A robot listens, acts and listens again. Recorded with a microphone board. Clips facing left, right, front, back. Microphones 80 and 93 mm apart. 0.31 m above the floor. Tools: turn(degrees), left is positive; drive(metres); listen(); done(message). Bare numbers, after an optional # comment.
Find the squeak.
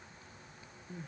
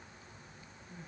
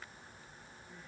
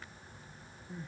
listen()
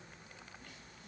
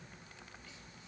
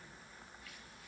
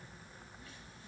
listen()
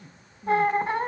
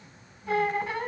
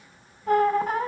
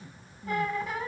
# The squeak: 40° left.
turn(40)
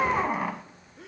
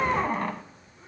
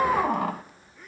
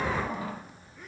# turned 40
done("Found it: a squeak, straight ahead.")